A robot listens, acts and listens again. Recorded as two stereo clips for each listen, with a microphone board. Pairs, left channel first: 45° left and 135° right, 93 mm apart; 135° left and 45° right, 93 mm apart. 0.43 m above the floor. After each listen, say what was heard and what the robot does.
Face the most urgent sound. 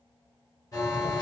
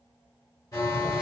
The alarm: 90° left. Turn 90° left.
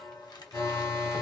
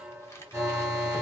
The alarm is now 10° left. Turn 10° left.
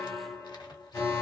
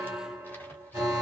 Facing the alarm.